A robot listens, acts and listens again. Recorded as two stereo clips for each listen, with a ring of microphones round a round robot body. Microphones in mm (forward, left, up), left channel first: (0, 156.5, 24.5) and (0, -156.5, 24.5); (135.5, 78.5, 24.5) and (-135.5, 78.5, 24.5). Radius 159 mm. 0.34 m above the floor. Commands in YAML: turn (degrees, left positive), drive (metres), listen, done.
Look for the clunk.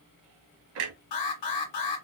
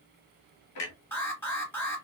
turn: -45
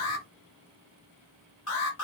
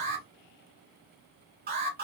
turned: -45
done: "I heard a clunk from this way, but can't make it out now."